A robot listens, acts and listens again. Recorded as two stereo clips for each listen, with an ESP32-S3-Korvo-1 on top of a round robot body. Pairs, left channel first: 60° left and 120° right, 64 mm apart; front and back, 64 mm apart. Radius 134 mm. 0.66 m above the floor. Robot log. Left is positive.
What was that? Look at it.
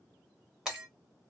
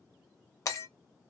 note: The breaking glass: 40° right.
cmd yaw -40
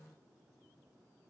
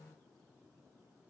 end: I heard breaking glass from this way, but can't make it out now.